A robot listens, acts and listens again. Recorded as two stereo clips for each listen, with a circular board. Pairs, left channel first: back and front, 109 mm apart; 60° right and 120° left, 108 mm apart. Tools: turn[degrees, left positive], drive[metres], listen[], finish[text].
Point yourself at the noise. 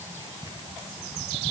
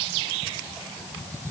Action: listen[]
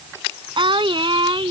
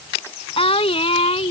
Thought: The singing: 40° right.
Action: turn[-40]
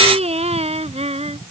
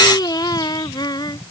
Thought: The singing is now 10° right.
Action: turn[-10]
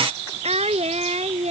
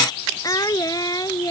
Action: finish[Facing the singing.]